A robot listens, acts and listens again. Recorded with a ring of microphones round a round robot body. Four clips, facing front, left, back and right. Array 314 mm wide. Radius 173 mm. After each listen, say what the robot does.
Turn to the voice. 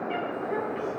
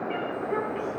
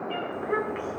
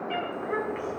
Turn 160° right.
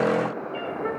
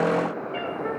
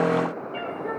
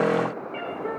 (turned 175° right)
Turn 15° left.
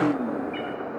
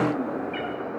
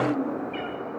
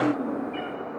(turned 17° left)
Found it: a child speaking, straight ahead, 2 to 4 m away.